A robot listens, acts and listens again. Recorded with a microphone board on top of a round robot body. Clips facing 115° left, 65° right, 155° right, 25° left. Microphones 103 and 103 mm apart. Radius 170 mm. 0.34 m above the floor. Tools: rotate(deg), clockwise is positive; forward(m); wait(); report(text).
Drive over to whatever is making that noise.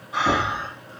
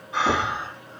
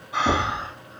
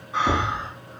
rotate(160)
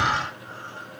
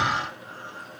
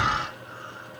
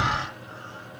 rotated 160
rotate(-10)
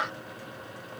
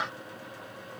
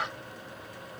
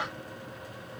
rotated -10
wait()
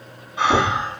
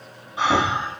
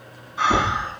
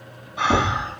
forward(1.0)
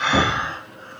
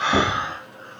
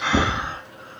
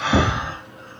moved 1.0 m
forward(1.0)
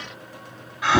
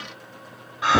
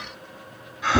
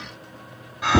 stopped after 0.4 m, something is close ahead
report("I am next to the breathing.")